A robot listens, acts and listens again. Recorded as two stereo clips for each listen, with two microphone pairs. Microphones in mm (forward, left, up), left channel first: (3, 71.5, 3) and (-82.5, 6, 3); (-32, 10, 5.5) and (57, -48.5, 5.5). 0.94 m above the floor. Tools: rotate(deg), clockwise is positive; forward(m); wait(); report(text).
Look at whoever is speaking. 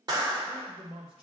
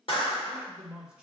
rotate(115)
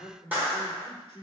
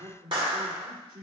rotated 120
report("Facing the man speaking.")